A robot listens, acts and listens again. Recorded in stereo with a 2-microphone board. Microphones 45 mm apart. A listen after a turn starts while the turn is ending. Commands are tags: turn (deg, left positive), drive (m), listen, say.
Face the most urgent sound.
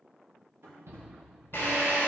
<turn deg="-75"/>
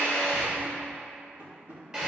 <listen/>
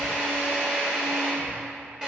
<listen/>
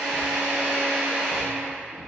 <say>Found it: a shout, straight ahead.</say>